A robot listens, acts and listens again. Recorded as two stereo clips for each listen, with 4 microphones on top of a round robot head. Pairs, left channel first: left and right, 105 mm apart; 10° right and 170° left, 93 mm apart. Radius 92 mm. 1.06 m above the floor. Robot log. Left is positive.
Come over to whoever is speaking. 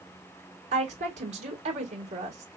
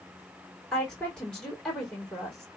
note: The woman speaking: 95° right.
cmd yaw -95
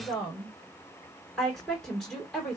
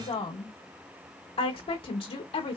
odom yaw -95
cmd fwd 1.0
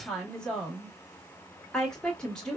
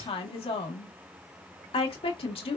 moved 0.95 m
cmd fwd 1.0
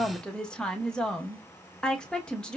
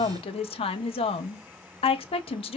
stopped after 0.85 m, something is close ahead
end: Arrived at the woman speaking, straight ahead.